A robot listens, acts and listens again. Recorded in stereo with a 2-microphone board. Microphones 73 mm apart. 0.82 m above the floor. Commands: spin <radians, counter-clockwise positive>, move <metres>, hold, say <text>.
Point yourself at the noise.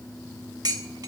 spin -1.13
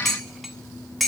say Facing the dishes clattering.